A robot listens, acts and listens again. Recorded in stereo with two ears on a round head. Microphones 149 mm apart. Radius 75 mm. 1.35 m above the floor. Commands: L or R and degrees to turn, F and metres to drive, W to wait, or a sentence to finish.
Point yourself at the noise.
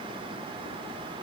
W
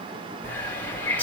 L30
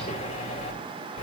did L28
L140
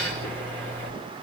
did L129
L10
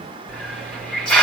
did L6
Found it: a hiss, straight ahead, over 4 m away.